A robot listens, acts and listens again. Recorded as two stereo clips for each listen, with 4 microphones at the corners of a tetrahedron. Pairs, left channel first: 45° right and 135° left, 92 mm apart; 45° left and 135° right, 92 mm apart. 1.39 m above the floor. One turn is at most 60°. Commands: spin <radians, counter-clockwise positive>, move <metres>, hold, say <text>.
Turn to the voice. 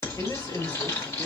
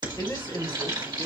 say Found it: a man speaking, straight ahead.